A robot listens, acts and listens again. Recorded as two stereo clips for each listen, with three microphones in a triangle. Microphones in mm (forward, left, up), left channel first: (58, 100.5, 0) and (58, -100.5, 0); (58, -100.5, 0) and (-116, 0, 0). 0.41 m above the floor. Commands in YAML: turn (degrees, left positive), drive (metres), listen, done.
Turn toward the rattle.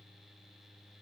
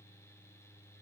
listen: true
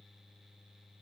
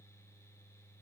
listen: true
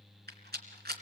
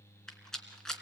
turn: -115
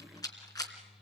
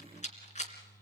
turn: 20
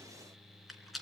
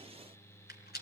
done: "Facing the rattle."